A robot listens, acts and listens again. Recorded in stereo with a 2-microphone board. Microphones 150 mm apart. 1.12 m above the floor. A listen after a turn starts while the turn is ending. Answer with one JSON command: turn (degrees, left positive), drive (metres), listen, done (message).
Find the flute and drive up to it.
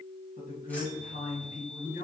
{"listen": true}
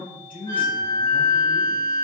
{"turn": 65}
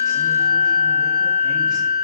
{"drive": 1.0}
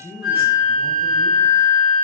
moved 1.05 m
{"drive": 1.0}
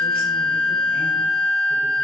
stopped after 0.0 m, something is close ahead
{"done": "Arrived at the flute, straight ahead."}